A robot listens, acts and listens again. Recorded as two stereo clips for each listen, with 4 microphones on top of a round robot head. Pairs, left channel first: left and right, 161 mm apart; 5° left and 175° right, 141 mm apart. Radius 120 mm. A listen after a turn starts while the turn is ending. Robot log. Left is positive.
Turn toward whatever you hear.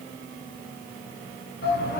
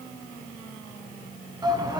note: The shout: 125° left.
cmd yaw +125
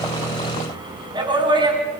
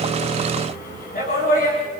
note: The shout is now 30° right.
cmd yaw -30
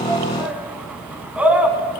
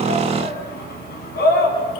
note: The shout is now 10° right.
cmd yaw -10
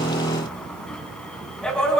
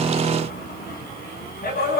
end: Facing the shout, 2 to 4 m away.